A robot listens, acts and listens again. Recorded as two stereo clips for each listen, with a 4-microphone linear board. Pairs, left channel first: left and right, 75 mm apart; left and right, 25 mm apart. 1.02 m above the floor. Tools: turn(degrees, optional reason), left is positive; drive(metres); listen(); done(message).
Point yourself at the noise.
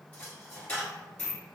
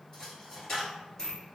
turn(degrees=20, reason="The dropped coin: about 20° left or 160° left.")
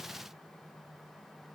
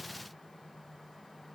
listen()
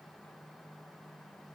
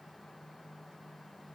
done("I heard a dropped coin, but can't make it out now. It was about straight ahead or 140° left.")